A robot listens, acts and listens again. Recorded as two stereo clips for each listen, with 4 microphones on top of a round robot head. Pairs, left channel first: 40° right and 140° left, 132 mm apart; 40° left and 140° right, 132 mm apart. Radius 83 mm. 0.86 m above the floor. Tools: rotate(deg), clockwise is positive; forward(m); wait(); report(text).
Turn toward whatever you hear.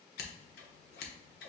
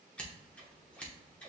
rotate(40)
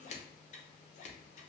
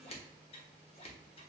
report("Facing the scissors, 1 to 2 m away.")